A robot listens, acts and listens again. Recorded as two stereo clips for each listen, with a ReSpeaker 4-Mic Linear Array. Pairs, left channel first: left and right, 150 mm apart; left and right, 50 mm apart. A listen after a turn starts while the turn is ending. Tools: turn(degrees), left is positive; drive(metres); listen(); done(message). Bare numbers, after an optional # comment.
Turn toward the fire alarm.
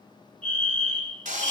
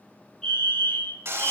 turn(30)
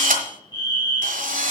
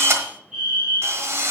# So it is at 20° right.
turn(-20)
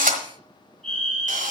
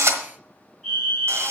done("Facing the fire alarm, 2 to 4 m away.")